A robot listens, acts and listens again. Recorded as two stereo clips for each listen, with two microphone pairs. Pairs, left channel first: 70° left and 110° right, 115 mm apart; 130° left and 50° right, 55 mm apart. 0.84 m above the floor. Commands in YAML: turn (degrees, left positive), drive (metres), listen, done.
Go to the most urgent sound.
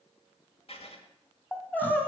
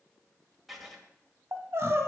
drive: 1.0
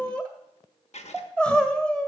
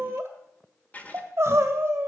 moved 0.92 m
turn: -15
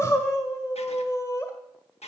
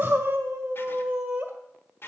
drive: 1.0
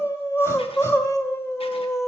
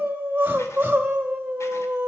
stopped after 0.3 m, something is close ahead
done: "Arrived at the crying, straight ahead."